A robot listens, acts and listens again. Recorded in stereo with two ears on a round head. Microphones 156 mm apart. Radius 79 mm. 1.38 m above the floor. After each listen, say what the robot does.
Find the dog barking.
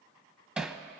Keep listening.
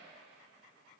Keep listening.
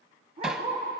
Turn 35° right.
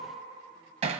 Keep listening.
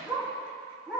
Facing the dog barking, over 4 m away.